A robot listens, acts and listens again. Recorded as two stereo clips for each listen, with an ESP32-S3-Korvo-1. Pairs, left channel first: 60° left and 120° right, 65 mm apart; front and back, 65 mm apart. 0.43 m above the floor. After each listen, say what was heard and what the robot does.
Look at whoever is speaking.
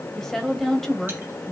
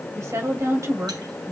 The woman speaking: 145° left. Turn 145° left.
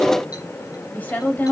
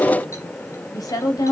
Facing the woman speaking.